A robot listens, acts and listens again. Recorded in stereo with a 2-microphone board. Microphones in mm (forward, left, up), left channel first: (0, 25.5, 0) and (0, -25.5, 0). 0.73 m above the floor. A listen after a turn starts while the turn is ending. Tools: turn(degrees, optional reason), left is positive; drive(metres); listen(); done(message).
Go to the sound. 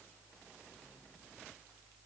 listen()
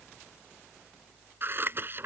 turn(degrees=-45, reason="The scissors: about 45° right or 135° right.")
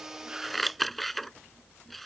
drive(metres=1.0)
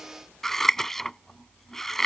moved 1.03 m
drive(metres=1.0)
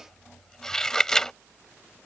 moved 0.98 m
turn(degrees=10, reason="The scissors is now 10° left.")
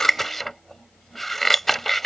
drive(metres=1.0)
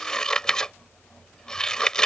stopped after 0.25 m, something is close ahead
turn(degrees=15, reason="The scissors is now 15° left.")
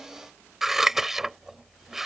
turn(degrees=-10, reason="The scissors is now 10° right.")
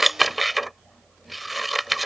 done("Arrived at the scissors, straight ahead.")